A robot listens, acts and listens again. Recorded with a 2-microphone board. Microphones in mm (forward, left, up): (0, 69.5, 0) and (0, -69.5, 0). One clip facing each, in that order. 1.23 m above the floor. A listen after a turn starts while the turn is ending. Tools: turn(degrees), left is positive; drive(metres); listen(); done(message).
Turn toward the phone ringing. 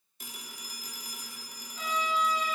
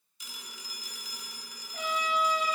turn(degrees=50)
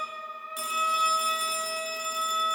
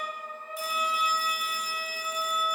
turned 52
listen()
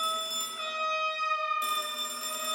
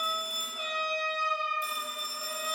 turn(degrees=75)
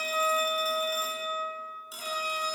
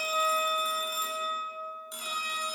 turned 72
done("Found it: a phone ringing, straight ahead, 2 to 4 m away.")